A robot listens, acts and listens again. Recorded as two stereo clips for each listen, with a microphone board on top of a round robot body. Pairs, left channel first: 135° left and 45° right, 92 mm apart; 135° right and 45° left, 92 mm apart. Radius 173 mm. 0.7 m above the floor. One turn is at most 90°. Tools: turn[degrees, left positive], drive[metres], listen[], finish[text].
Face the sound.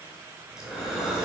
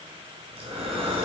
Thought: The breathing: 40° left.
Action: turn[40]
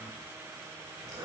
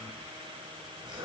Action: finish[Facing the breathing, 2 to 4 m away.]